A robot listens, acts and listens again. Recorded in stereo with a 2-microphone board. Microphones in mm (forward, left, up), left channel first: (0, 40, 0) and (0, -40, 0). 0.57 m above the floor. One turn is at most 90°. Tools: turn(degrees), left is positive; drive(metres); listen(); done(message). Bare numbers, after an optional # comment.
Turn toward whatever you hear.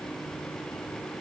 listen()
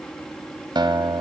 # The guitar: about 70° right or 110° right.
turn(-70)
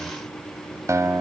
# So it is at 40° right.
turn(-40)
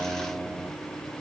# The guitar is now 15° right.
turn(-15)
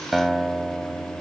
done("Facing the guitar, 1 to 2 m away.")